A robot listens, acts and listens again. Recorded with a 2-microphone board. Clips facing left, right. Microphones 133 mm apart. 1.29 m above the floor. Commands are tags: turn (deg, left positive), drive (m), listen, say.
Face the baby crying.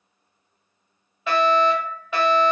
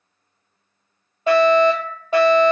<listen/>
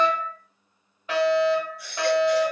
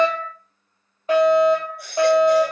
<turn deg="-55"/>
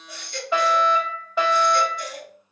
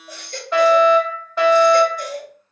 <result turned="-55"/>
<turn deg="-55"/>
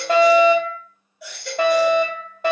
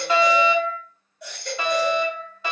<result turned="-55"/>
<say>Facing the baby crying, 1 to 2 m away.</say>